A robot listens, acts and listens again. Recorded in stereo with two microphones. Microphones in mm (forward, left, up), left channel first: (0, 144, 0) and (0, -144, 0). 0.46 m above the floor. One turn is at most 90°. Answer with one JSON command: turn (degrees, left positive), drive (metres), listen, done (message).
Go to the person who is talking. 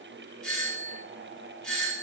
{"listen": true}
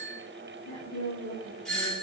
{"turn": 70}
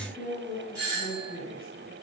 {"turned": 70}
{"turn": 35}
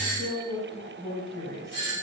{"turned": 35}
{"drive": 1.0}
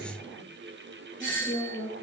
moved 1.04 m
{"drive": 1.0}
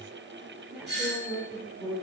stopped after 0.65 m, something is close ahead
{"done": "I am next to the woman speaking."}